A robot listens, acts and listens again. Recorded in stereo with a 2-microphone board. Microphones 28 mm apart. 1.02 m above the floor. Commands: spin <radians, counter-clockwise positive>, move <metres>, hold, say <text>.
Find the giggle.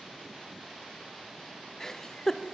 spin 0.35
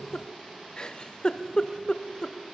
spin 2.36
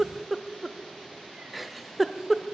say Facing the giggle, 1 to 2 m away.